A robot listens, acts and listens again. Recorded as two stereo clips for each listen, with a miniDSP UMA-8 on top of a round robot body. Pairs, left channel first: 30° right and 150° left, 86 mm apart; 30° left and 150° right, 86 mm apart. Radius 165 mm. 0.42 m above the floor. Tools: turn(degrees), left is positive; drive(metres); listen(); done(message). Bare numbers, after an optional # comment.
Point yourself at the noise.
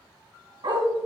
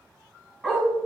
# The dog barking: 110° left.
turn(110)
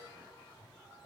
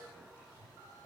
listen()
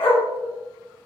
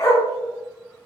# The dog barking is now 30° right.
turn(-30)
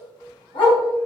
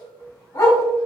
# The dog barking is now 20° right.
turn(-20)
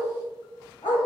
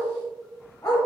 # The dog barking is now 15° right.
turn(-15)
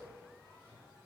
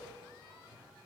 listen()
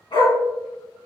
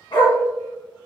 done("Found it: a dog barking, straight ahead, 1 to 2 m away.")